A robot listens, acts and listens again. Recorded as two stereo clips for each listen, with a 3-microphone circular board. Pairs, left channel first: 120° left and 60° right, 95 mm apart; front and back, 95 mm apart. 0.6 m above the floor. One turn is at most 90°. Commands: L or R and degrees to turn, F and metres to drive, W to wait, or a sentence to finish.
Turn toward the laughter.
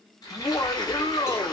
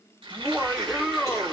L90
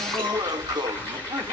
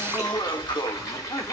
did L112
R25
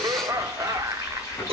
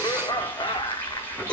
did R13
R10
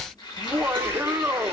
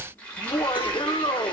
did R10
Facing the laughter.